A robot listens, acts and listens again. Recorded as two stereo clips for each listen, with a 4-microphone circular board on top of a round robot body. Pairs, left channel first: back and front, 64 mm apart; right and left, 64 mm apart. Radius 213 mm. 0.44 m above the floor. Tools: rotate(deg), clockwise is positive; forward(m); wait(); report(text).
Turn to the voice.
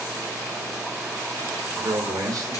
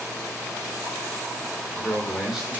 report("Facing the man speaking.")